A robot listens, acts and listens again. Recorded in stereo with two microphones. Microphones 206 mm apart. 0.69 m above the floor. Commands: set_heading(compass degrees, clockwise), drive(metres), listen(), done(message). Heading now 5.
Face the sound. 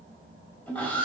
set_heading(335)
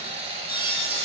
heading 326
set_heading(356)
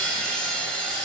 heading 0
done("Facing the sawing, over 4 m away.")